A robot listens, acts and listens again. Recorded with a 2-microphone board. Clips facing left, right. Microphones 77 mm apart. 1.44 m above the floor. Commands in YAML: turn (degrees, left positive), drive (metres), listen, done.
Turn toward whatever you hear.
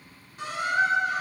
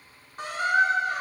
turn: -45
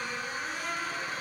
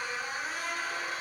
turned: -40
done: "Facing the squeak, 2 to 4 m away."